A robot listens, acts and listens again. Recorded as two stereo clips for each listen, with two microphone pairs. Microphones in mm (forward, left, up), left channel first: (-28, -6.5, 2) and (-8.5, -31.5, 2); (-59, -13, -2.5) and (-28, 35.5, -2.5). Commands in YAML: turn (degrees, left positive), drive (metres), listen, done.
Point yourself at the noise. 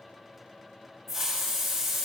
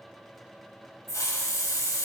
turn: -135
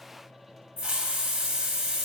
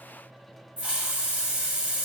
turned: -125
turn: -10
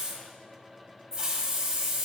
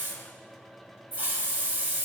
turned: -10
done: "Found it: a hiss, straight ahead, 1 to 2 m away."